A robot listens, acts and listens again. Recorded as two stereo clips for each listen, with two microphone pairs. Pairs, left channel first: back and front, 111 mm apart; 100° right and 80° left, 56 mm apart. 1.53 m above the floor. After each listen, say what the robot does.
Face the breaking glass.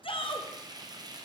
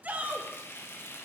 Keep listening.
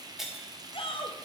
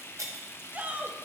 Turn 85° left.
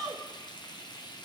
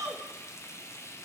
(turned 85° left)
Facing where the breaking glass came from. I can't hear it now.